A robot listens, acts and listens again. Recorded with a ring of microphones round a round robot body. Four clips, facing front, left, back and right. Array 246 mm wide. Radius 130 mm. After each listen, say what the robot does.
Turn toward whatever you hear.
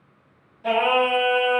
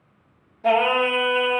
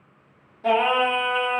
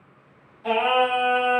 Turn 130° left.
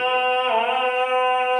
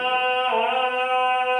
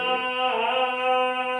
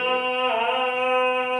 Found it: singing, straight ahead.